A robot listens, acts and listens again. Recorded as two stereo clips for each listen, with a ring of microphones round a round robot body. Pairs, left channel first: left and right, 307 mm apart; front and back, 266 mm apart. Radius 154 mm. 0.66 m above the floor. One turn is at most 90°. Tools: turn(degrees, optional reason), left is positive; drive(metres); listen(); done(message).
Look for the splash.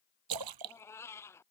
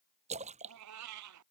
turn(degrees=-90, reason="The splash: 110° right.")
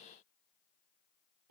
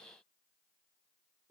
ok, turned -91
turn(degrees=-20, reason="Nothing new. It was at 20° right.")
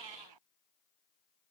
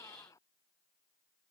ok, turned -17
done("Facing where the splash came from. I can't hear it now.")